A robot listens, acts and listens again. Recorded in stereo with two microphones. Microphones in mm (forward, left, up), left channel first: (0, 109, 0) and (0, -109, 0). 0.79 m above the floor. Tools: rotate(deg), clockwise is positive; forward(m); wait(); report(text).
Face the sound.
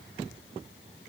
wait()
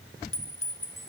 rotate(-90)
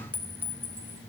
rotate(10)
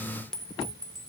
report("Facing the clink, 1 to 2 m away.")